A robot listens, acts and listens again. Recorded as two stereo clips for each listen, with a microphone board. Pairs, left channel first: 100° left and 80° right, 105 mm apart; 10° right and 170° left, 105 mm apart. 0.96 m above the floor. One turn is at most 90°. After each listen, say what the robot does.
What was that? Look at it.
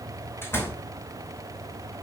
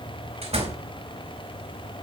Turn 90° left.
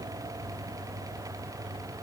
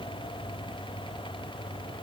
Turn 75° left.
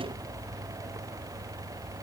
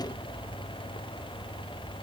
Facing where the door slam came from. I can't hear it now.